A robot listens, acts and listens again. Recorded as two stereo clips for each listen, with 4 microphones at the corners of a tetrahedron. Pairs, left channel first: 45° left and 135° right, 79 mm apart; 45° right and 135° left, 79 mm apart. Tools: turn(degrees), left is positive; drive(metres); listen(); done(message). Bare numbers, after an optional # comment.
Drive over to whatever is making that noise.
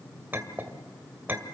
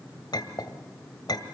# The clink: 70° right.
turn(-70)
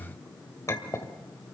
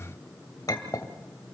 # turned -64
drive(1.0)
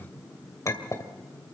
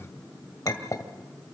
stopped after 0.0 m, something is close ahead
done("Blocked. The clink is further on, straight ahead.")